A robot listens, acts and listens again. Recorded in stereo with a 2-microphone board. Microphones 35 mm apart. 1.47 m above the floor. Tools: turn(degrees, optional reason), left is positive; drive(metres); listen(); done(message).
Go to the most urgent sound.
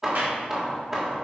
listen()
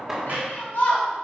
turn(degrees=90)
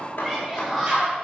turn(degrees=-10, reason="So it is at 10° right.")
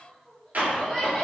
drive(metres=1.0)
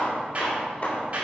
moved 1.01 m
listen()
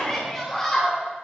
drive(metres=1.0)
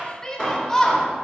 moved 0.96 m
turn(degrees=15, reason="The shout is now 15° left.")
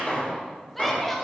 drive(metres=1.0)
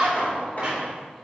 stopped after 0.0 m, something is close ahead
done("Arrived at the shout, straight ahead.")